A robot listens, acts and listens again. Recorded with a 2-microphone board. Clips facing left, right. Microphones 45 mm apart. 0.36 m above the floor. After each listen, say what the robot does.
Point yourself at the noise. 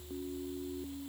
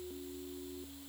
Keep listening.
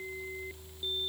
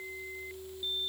Keep listening.
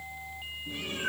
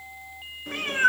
Turn 65° right.
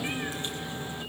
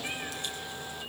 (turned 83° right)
Turn 30° left.
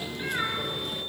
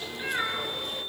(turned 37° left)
Facing the cat meowing, 2 to 4 m away.